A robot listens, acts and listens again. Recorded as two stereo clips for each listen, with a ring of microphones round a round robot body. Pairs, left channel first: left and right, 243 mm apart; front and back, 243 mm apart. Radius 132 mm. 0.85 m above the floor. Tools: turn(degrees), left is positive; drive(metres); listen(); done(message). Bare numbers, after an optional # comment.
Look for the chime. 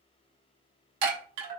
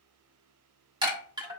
# The chime: 105° right.
turn(-105)
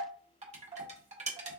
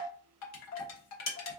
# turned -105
# The chime is now 25° right.
turn(-25)
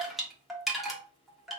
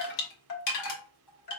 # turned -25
done("Facing the chime, 1 to 2 m away.")